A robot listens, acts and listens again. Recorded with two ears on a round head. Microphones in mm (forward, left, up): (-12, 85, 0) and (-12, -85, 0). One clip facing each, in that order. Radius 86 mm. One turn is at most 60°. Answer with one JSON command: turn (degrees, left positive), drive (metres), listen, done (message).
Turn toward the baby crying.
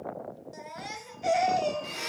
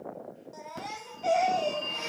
{"turn": 20}
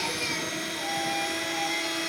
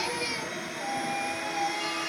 {"listen": true}
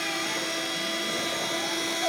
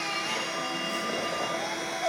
{"listen": true}
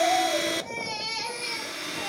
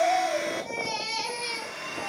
{"done": "Facing the baby crying, 2 to 4 m away."}